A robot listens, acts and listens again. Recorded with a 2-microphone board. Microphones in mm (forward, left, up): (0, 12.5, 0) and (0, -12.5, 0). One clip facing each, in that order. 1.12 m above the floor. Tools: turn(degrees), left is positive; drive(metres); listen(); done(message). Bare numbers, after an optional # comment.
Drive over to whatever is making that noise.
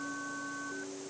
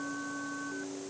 listen()
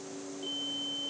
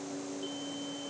listen()
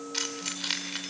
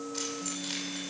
# The keys jangling: about 45° left or 135° left.
turn(45)
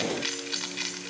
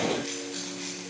# So it is at 90° left.
turn(90)
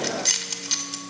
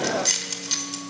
# The keys jangling is now 10° left.
turn(10)
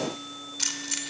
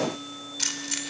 drive(1.0)
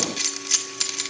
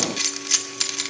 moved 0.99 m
drive(1.0)
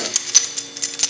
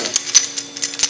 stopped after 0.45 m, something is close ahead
# The keys jangling is now 15° right.
turn(-15)
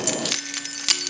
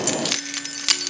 done("I am next to the keys jangling.")